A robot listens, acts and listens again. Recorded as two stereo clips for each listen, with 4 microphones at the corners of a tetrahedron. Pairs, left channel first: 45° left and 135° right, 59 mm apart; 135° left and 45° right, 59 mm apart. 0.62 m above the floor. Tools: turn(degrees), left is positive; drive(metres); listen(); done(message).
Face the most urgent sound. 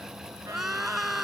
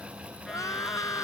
turn(degrees=140)
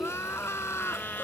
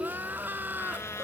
done("Found it: crying, straight ahead.")